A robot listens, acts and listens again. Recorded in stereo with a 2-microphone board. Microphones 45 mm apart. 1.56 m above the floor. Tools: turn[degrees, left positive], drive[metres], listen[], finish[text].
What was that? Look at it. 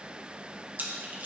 Thought: The splash: about 45° right or 135° right.
Action: turn[-45]
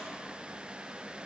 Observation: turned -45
Action: listen[]
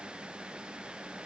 Action: finish[I heard a splash, but can't make it out now. It was about straight ahead or 90° right.]